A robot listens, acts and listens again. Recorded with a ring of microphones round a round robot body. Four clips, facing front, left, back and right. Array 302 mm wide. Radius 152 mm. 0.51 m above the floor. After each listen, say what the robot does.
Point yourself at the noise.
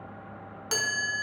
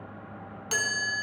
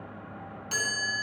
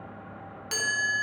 Turn 20° left.
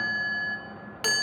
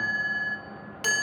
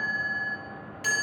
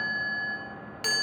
Turn 10° left.
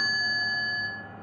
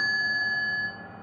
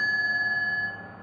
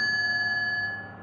Found it: a chime, straight ahead.